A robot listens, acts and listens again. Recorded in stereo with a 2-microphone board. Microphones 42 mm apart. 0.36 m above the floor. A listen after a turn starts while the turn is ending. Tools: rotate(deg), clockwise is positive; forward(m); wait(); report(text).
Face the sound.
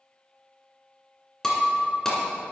rotate(-30)
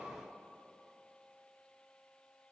wait()
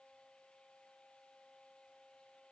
report("I heard breaking glass, but can't make it out now. It was about 20° right or 140° left.")